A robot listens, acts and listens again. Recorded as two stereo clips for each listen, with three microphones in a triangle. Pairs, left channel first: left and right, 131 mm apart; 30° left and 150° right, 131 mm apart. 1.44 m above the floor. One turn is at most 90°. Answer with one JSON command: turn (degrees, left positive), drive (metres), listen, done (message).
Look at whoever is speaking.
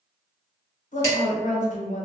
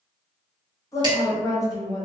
{"turn": 90}
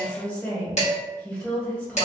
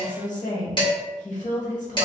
{"turn": 10}
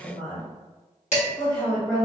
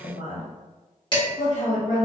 {"turn": 10}
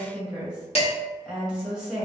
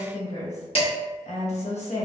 {"done": "Found it: a woman speaking, straight ahead, 1 to 2 m away."}